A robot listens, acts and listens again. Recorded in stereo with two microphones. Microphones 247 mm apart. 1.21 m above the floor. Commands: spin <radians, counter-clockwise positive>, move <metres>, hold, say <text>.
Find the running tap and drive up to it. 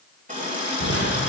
spin -0.52
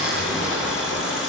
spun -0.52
move 1.0
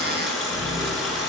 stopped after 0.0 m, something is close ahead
say Blocked. The running tap is further on, straight ahead.